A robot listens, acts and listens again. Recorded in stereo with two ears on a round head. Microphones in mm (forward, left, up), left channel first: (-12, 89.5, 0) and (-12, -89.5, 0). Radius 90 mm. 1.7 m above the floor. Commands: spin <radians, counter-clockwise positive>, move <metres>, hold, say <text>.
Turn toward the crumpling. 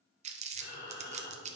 spin -0.61
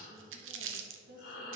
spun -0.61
spin -1.92
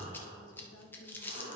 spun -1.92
spin 0.17
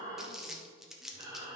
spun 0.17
say Facing the crumpling, under 1 m away.